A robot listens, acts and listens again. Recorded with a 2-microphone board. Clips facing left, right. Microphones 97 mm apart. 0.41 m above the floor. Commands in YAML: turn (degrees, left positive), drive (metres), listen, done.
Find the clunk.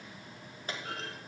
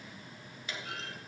turn: 40
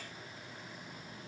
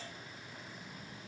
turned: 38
listen: true
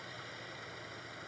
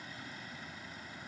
done: "I heard a clunk, but can't make it out now. It was about 5° left or 100° left."